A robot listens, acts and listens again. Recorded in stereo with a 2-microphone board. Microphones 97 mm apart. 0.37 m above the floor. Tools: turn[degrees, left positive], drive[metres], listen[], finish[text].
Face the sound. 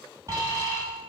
Thought: The alarm: about 35° right or 145° right.
Action: turn[-35]
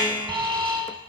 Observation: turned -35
Thought: So it is at 105° right.
Action: turn[-105]
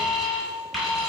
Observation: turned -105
Action: finish[Facing the alarm.]